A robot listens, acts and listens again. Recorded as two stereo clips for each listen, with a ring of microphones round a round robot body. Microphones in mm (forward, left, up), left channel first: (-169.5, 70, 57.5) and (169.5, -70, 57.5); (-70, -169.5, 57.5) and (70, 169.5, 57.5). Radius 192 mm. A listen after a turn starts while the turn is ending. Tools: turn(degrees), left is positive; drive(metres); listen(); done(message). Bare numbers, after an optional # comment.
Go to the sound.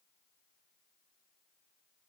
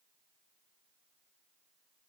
listen()
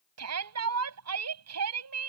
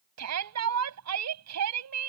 # The shout: 25° left.
turn(25)
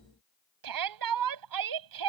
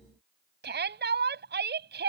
drive(1.0)
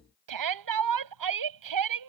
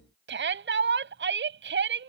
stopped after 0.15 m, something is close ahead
# The shout is now 10° left.
turn(10)
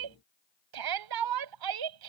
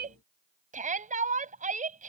done("Something is in my way. I am facing the shout but have not reached it.")